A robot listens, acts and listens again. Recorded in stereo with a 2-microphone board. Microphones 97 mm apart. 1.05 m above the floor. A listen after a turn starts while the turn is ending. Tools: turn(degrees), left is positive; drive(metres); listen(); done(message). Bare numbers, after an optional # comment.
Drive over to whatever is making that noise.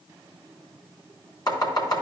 # The chopping: about 45° left or 135° left.
turn(45)
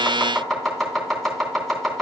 drive(1.0)
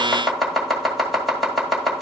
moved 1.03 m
drive(1.0)
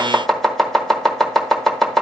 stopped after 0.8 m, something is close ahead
done("Arrived at the chopping, straight ahead.")